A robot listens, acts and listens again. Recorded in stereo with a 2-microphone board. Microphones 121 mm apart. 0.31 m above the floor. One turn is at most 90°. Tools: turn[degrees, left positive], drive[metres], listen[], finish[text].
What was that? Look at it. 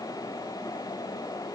Action: listen[]
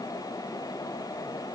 Action: listen[]
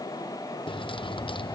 Thought: The keys jangling: about 40° left or 140° left.
Action: turn[40]
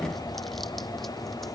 Action: finish[Facing the keys jangling.]